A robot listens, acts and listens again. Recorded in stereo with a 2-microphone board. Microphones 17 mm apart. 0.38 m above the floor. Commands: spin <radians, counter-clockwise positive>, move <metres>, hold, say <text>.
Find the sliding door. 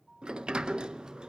spin -1.57
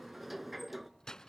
spin -0.17
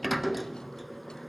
say Facing the sliding door, under 1 m away.